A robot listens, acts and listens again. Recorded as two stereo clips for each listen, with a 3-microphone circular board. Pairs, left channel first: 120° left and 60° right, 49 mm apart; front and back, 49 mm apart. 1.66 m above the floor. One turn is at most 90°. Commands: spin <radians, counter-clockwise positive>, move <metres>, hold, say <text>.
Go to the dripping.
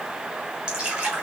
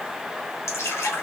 spin 0.26
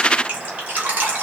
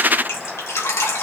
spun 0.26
move 1.0
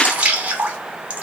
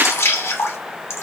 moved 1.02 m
move 1.0
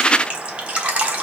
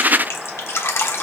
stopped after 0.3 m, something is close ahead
say Arrived at the dripping, straight ahead.